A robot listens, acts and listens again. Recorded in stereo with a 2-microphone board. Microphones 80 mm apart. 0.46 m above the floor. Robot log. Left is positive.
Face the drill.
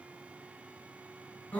cmd idle
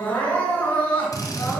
note: The drill: about 50° left or 130° left.
cmd yaw +50
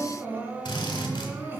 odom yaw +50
note: So it is at 80° left.
cmd yaw +80
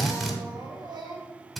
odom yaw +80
end: Found it: a drill, straight ahead, 1 to 2 m away.